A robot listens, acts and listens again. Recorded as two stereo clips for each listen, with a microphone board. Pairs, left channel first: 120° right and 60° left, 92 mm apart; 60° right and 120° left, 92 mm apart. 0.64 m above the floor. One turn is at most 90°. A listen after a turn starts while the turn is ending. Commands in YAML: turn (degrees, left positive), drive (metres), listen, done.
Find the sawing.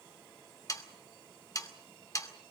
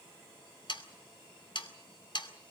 turn: -75
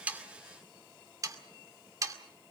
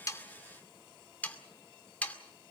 turn: 15
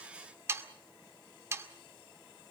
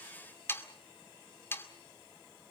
done: "Found it: sawing, straight ahead, 2 to 4 m away."